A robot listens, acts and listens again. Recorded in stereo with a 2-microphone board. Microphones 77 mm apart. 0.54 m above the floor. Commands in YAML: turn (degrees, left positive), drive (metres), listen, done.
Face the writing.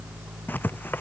turn: 25
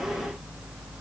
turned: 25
listen: true
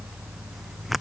done: "Found it: writing, straight ahead."